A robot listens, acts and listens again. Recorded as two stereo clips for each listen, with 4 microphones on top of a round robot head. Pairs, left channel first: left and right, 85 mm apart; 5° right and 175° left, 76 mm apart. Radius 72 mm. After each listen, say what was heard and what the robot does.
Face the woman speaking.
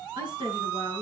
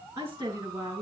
The woman speaking: 120° right. Turn 120° right.
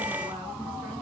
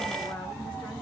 Keep listening.
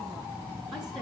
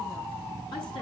Keep listening.
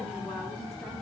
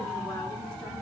I heard a woman speaking from this way, but can't make it out now.